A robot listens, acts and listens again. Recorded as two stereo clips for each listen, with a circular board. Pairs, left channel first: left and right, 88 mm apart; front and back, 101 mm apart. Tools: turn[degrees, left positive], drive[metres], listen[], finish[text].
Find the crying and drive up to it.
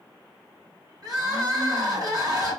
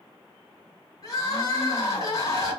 Thought: The crying: 40° right.
Action: turn[-40]
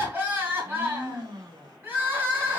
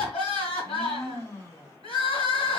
Thought: The crying is now 15° right.
Action: turn[-15]
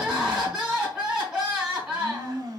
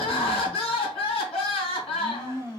Action: drive[1.0]
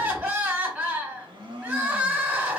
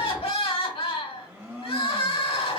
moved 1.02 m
Thought: The crying is now 15° right.
Action: turn[-15]
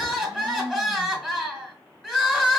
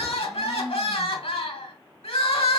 Action: drive[1.0]
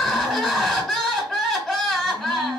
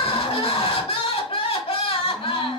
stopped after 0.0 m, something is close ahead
Thought: The crying is now 10° left.
Action: turn[10]
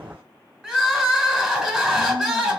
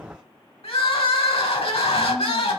Action: finish[I am next to the crying.]